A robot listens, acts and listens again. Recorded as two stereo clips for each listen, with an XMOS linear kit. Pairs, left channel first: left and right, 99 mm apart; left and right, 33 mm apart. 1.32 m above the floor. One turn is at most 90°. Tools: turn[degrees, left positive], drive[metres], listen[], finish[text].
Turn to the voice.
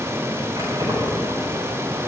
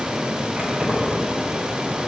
Action: listen[]
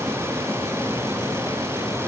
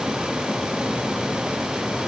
Action: listen[]
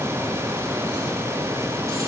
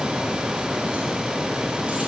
Action: finish[I can't make out anyone speaking, only keys jangling.]